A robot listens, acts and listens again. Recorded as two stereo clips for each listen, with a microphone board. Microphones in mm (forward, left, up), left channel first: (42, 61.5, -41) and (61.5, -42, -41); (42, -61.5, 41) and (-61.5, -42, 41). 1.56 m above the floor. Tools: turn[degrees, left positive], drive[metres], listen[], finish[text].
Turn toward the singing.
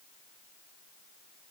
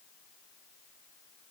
Action: listen[]
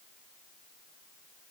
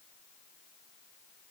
Action: listen[]
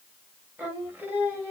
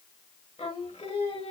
Thought: The singing: 10° right.
Action: turn[-10]
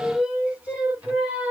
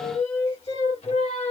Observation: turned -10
Action: finish[Facing the singing.]